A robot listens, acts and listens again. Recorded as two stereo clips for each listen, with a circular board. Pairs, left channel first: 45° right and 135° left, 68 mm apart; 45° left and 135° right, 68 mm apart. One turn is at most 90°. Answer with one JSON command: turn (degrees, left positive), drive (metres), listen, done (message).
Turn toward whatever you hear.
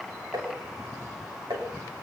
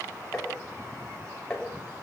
{"turn": 90}
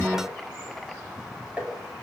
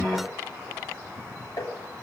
{"turn": 60}
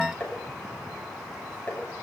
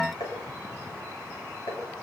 {"turn": 25}
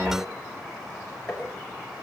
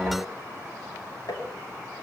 {"turn": 30}
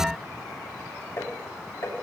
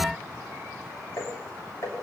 {"done": "Found it: tapping, straight ahead, over 4 m away."}